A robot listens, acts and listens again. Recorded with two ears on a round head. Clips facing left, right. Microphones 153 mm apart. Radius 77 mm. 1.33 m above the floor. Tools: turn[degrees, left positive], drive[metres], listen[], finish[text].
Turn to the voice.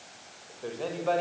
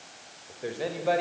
Action: turn[-30]
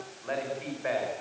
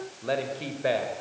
Thought: So it is at 135° right.
Action: turn[-135]
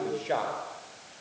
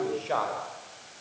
Thought: The man speaking is now 15° left.
Action: turn[15]
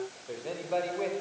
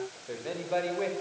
Action: finish[Found it: a man speaking, straight ahead.]